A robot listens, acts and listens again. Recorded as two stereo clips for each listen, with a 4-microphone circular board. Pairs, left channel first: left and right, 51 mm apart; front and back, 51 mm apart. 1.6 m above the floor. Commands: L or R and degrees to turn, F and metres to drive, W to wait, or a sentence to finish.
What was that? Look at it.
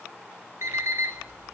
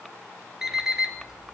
R100
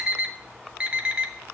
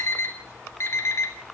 R25
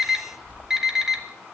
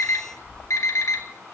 R10
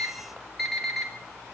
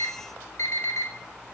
Facing the alarm clock.